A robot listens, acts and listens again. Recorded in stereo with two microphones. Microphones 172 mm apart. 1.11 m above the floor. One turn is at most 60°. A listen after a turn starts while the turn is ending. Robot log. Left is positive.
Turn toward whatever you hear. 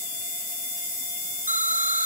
note: The explosion: about 50° left or 130° left.
cmd yaw +50
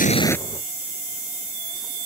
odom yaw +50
cmd idle
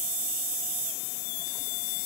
end: I heard an explosion, but can't make it out now. It was about straight ahead or 80° left.